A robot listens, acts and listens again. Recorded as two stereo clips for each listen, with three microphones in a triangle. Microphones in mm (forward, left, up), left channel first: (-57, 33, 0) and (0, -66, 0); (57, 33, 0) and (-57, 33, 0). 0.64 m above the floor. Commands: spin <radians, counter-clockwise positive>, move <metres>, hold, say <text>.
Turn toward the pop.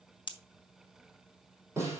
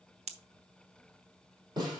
spin 2.88
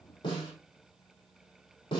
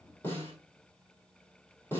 say I heard a pop from this way, but can't make it out now.